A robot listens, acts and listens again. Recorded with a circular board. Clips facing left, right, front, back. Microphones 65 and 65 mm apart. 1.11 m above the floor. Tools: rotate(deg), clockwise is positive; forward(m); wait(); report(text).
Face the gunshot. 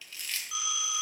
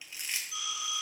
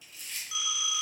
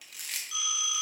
wait()
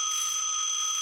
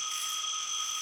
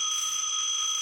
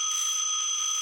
wait()
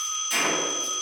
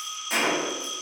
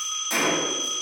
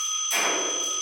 rotate(35)
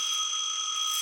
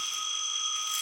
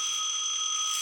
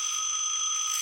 report("I heard a gunshot from this way, but can't make it out now.")